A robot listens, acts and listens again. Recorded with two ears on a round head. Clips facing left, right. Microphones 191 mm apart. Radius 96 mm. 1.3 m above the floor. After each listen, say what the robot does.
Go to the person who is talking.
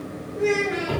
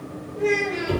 Turn 30° left.
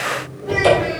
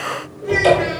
Keep listening.
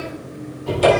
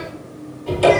Keep listening.
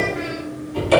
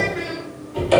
I heard a child speaking, but can't make it out now. It was about 15° right or 135° left. I did not reach it.